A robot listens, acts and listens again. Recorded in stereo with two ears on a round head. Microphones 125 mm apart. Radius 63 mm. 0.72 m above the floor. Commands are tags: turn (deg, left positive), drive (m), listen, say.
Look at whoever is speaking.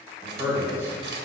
<turn deg="-15"/>
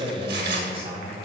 <turn deg="-135"/>
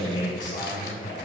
<turn deg="30"/>
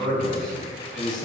<say>Facing the man speaking, 2 to 4 m away.</say>